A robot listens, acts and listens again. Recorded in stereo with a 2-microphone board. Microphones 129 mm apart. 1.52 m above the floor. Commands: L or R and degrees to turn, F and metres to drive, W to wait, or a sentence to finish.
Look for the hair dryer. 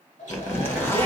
L70
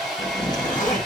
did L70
Facing the hair dryer, 1 to 2 m away.